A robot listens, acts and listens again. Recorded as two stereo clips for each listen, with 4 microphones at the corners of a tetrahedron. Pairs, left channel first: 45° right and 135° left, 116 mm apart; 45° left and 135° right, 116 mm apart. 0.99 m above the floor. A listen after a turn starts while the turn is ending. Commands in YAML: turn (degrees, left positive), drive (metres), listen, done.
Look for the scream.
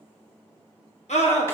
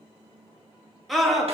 turn: -45
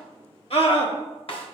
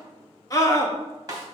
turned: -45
turn: -15
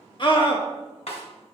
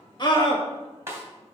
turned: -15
done: "Found it: a scream, straight ahead, 1 to 2 m away."